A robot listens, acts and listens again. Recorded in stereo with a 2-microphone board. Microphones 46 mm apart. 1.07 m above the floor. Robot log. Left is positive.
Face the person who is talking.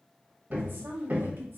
note: The woman speaking: about 55° right or 125° right.
cmd yaw -55
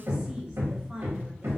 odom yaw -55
note: So it is at 20° right.
cmd yaw -20
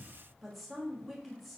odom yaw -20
end: Facing the woman speaking.